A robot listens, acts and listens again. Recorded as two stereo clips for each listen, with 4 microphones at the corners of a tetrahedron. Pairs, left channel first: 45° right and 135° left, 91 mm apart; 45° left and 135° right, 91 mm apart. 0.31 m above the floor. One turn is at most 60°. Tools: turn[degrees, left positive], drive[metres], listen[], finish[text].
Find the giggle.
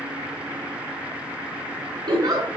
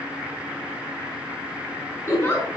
Thought: The giggle: 105° left.
Action: turn[60]
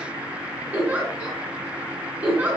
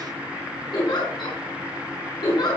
Thought: The giggle is now 65° left.
Action: turn[60]
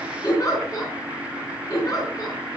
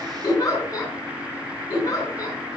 Action: finish[Facing the giggle.]